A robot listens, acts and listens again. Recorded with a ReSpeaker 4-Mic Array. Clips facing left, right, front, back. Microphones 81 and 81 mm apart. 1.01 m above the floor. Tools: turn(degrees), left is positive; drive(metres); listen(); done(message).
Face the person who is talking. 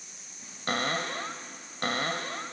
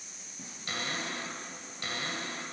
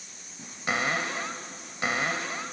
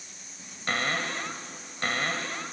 listen()
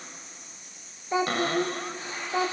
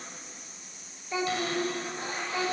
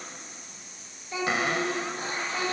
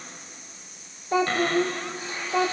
turn(degrees=145)
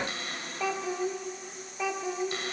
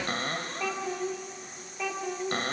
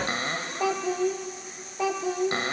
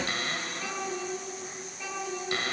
turn(degrees=10)
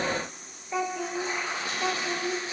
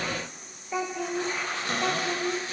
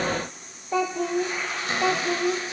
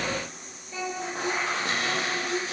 done("Found it: a child speaking, straight ahead.")